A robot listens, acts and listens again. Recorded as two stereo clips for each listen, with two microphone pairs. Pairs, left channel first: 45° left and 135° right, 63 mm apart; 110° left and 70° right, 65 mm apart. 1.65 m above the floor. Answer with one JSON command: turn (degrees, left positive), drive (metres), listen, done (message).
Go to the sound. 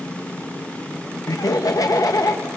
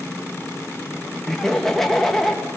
{"turn": 30}
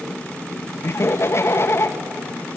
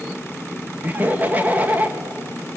{"drive": 1.0}
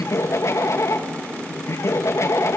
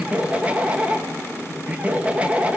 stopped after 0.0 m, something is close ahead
{"done": "Something is in my way. I am facing the laughter but have not reached it."}